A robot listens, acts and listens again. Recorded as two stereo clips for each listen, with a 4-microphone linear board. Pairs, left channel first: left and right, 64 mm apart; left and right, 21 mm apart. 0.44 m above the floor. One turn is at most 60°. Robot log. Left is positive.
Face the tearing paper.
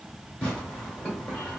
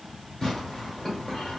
note: The tearing paper: about 15° left or 165° left.
cmd yaw +15
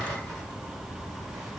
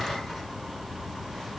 cmd idle
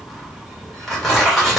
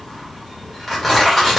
end: Found it: tearing paper, straight ahead, 1 to 2 m away.